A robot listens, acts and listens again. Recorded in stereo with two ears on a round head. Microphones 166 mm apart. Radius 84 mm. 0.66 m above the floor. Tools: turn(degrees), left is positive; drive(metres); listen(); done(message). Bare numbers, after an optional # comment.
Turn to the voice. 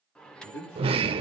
turn(90)
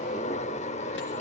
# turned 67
# Nothing new. It was at 25° left.
turn(25)
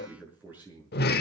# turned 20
# The man speaking is now 10° right.
turn(-10)
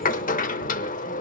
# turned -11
listen()
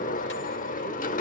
listen()
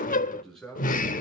done("Found it: a man speaking, straight ahead.")